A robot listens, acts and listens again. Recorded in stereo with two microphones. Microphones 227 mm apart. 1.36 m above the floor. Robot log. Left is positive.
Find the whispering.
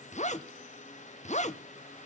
cmd idle
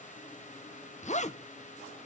cmd idle
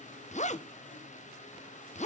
end: I can't make out whispering, only a zipper.